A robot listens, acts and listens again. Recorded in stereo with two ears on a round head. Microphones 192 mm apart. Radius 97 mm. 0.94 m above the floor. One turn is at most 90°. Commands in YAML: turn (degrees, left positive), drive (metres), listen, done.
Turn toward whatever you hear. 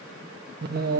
turn: -40
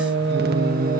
turn: -40
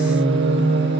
turn: -90
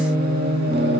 turn: -50
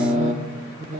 turn: -35
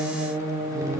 turn: -15
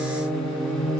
done: "Facing the singing."